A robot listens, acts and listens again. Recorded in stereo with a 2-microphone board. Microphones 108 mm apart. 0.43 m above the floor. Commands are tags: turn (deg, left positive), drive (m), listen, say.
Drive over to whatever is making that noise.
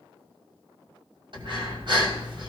<turn deg="-50"/>
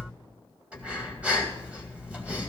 <turn deg="-15"/>
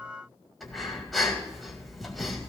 <drive m="1.0"/>
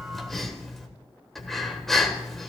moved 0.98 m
<drive m="1.0"/>
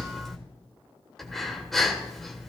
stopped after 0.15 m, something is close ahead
<say>I am next to the breathing.</say>